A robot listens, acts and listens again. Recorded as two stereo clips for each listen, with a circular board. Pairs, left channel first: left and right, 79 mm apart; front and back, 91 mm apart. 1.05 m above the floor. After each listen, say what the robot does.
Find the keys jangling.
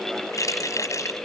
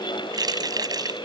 Turn 135° left.
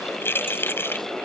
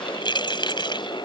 Turn 30° left.
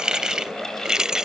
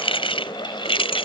Turn 10° right.
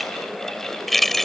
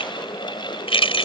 Found it: keys jangling, straight ahead.